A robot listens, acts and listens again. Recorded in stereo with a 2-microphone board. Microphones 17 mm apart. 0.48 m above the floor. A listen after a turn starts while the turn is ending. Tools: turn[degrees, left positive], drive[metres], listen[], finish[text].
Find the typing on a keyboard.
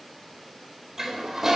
Action: listen[]
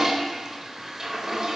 Action: listen[]
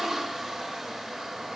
Action: finish[I can't make out typing on a keyboard, only a toilet flushing.]